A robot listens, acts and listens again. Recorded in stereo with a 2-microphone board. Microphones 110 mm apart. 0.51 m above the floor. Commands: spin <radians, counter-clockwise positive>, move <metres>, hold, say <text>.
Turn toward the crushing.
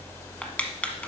spin 0.52
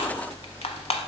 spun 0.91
spin 2.01
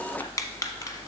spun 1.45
spin 0.52
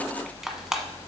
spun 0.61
say Facing the crushing, under 1 m away.